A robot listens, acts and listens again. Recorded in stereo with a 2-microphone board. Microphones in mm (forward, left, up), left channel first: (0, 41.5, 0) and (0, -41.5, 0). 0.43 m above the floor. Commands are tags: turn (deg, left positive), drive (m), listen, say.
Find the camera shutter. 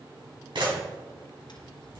<turn deg="-70"/>
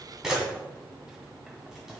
<say>Found it: a camera shutter, straight ahead, 2 to 4 m away.</say>